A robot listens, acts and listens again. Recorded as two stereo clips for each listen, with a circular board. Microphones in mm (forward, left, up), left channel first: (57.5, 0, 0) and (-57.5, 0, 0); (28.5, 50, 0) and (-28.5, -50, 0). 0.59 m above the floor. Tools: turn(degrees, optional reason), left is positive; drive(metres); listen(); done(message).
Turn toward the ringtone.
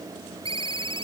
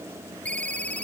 turn(degrees=135, reason="The ringtone: 135° left.")
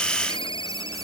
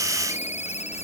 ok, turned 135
turn(degrees=45, reason="The ringtone is now 45° left.")
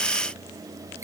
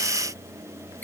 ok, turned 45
listen()
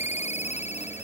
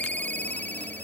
turn(degrees=-15, reason="The ringtone is now 15° right.")
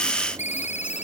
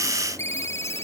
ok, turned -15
turn(degrees=-10, reason="The ringtone is now 10° right.")
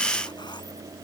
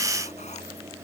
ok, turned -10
listen()
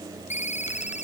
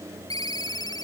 done("Facing the ringtone.")